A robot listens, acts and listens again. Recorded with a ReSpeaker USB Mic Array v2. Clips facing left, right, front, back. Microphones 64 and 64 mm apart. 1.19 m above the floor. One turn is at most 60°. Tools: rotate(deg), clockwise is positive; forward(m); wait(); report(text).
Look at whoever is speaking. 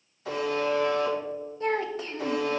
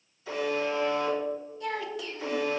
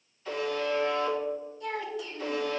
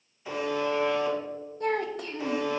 rotate(-60)
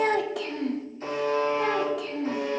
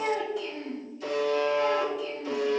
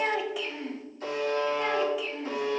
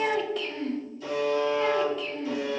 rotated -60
rotate(-60)
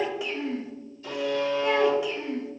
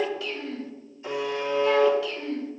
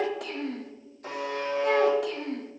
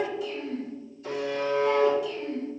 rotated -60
rotate(-20)
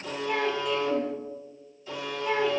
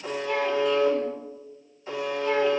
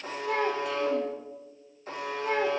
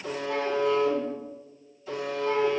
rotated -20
wait()
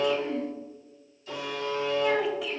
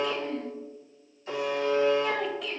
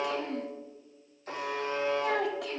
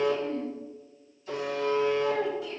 report("Found it: a child speaking, straight ahead, under 1 m away.")